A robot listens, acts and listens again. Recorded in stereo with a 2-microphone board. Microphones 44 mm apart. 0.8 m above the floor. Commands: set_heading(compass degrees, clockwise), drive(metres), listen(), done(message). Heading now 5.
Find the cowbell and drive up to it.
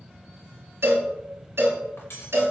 set_heading(75)
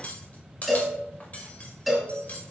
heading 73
drive(1.0)
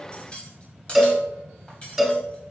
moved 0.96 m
drive(1.0)
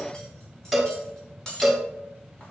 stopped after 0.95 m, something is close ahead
done("I am next to the cowbell.")